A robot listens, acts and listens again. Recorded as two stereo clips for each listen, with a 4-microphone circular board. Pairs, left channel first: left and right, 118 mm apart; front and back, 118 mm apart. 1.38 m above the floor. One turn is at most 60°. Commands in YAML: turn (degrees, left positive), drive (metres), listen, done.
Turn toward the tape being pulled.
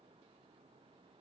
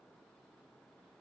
listen: true
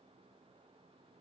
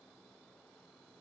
listen: true
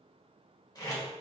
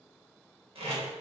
turn: 60
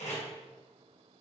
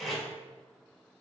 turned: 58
turn: 60
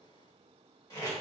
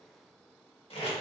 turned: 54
turn: 35
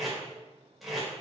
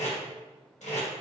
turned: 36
done: "Facing the tape being pulled, 1 to 2 m away."